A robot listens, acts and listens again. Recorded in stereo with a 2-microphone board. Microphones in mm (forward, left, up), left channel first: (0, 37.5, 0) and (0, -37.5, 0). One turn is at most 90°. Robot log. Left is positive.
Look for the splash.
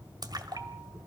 note: The splash: about 60° right or 120° right.
cmd yaw -60
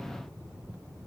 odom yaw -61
cmd idle
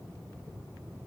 end: I heard a splash, but can't make it out now. It was about straight ahead or 55° right.